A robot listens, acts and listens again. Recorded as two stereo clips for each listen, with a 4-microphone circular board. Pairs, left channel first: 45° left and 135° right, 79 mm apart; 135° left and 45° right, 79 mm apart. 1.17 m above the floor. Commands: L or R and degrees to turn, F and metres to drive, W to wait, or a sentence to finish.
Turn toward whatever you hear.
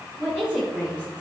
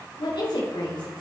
L150
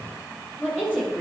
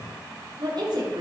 R25
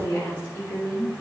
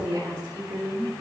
L10
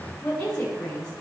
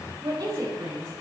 Found it: a woman speaking, straight ahead.